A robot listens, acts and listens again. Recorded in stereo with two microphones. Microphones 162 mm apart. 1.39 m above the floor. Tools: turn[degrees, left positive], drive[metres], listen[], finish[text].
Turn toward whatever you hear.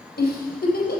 Thought: The giggle: about 75° left or 105° left.
Action: turn[75]
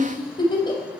Thought: So it is at 30° left.
Action: turn[30]
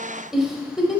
Action: finish[Facing the giggle, over 4 m away.]